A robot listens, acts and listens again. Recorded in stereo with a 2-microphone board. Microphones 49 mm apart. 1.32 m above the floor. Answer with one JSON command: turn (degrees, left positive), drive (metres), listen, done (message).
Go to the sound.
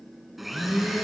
{"turn": -30}
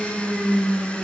{"turn": 25}
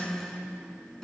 {"turn": 15}
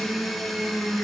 {"drive": 1.0}
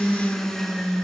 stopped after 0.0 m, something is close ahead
{"turn": 10}
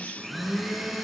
{"done": "Blocked. The blender is further on, straight ahead."}